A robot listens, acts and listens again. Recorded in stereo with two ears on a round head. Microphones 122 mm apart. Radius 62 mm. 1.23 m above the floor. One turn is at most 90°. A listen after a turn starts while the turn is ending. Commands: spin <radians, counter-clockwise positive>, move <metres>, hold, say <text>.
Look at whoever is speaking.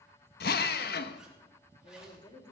spin 0.52
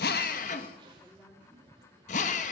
say Found it: a woman speaking, straight ahead, 2 to 4 m away.